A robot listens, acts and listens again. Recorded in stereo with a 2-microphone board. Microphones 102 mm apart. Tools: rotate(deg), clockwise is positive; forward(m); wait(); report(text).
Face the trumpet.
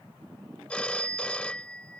wait()
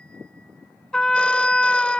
rotate(-30)
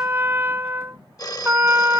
rotate(20)
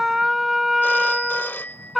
report("Found it: a trumpet, straight ahead.")